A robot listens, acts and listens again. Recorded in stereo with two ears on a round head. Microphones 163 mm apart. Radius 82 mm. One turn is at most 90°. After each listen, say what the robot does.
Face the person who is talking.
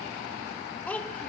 Turn 30° left.
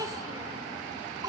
Turn 20° right.
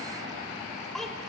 Found it: a child speaking, straight ahead, 2 to 4 m away.